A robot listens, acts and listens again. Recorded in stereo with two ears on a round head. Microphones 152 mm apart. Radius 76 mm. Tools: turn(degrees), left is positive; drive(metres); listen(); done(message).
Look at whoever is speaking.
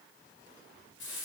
listen()
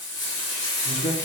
turn(degrees=45)
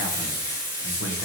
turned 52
turn(degrees=80)
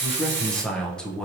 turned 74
done("Facing the man speaking.")